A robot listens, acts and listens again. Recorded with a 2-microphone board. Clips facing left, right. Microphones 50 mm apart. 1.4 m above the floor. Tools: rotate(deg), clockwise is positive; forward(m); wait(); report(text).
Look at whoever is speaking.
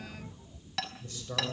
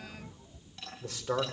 rotate(90)
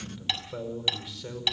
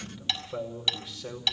report("Facing the man speaking.")